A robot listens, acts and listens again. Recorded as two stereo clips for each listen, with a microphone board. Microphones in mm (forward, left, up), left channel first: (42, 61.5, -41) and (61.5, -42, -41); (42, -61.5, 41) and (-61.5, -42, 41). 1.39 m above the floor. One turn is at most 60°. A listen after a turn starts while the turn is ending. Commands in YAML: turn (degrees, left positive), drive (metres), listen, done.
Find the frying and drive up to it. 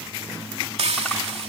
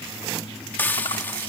turn: -60
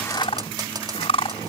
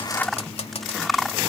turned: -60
turn: -30
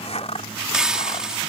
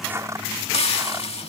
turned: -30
drive: 1.0
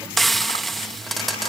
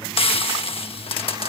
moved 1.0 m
turn: 10
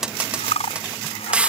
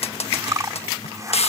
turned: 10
drive: 1.0
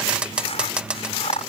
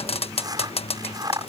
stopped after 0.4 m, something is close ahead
done: "Arrived at the frying, straight ahead."